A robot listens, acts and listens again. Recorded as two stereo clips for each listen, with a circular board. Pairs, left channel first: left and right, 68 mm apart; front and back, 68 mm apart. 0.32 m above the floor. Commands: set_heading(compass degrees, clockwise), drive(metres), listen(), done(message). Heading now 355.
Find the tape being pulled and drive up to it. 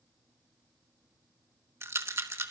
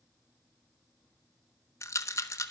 listen()
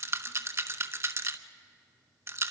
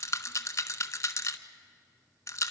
listen()
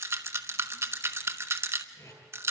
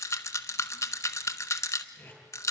set_heading(295)
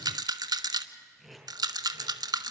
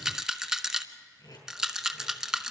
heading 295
drive(1.0)
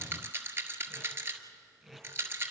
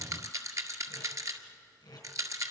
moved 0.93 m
drive(1.0)
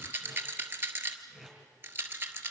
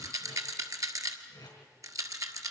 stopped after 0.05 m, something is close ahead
done("Something is in my way. I am facing the tape being pulled but have not reached it.")